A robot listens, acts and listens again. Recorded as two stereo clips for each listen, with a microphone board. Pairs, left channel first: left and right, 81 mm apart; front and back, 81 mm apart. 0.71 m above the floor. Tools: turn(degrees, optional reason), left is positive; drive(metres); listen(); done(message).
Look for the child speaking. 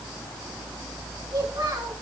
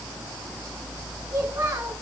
turn(degrees=-125, reason="The child speaking: 125° right.")
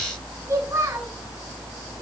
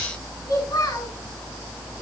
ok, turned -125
turn(degrees=-35, reason="The child speaking is now 35° right.")
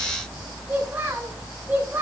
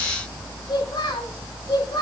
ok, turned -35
turn(degrees=-20, reason="The child speaking is now 20° right.")
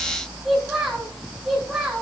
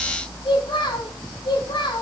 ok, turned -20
done("Found it: a child speaking, straight ahead, 2 to 4 m away.")